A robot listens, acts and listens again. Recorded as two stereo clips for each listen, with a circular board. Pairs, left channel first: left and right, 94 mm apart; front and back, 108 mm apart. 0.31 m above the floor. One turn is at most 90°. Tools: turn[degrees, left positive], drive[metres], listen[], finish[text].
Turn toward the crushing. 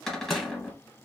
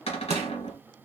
Thought: The crushing: 175° left.
Action: turn[90]
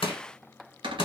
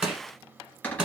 Thought: The crushing is now 100° left.
Action: turn[90]
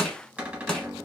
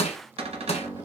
Thought: The crushing is now 10° left.
Action: turn[10]
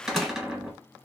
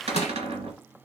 Action: finish[Found it: crushing, straight ahead.]